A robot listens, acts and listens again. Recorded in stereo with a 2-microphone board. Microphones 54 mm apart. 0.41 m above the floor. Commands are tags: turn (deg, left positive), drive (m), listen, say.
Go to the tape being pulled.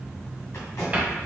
<turn deg="65"/>
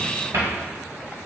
<listen/>
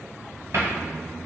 <listen/>
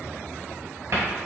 <say>I heard tape being pulled, but can't make it out now. It was about straight ahead or 50° left. I did not reach it.</say>